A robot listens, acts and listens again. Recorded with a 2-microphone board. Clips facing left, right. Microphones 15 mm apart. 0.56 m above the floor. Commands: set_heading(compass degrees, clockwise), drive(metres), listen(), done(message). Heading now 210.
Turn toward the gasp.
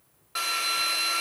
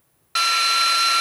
listen()
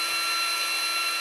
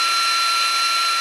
listen()
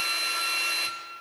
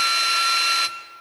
done("I can't make out a gasp, only a drill.")